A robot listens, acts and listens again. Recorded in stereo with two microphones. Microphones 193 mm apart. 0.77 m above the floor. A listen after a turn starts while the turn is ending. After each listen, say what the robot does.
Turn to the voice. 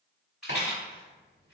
Keep listening.
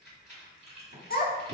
Turn 50° left.
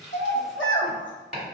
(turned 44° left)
Turn 85° left.
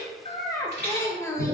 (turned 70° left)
Turn 15° left.
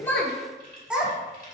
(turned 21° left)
Found it: a child speaking, straight ahead, under 1 m away.